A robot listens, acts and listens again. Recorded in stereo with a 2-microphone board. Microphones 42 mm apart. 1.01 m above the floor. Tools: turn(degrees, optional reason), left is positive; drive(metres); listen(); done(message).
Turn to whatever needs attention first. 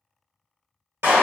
listen()
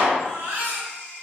turn(degrees=-50, reason="The baby crying: about 50° right or 130° right.")
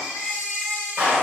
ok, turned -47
done("Facing the baby crying, 1 to 2 m away.")